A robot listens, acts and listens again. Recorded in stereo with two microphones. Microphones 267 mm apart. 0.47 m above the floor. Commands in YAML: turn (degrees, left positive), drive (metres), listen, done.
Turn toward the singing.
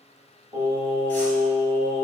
turn: 15
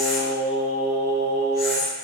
turn: 30
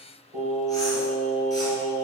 turn: -35
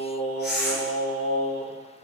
done: "Found it: singing, straight ahead, 2 to 4 m away."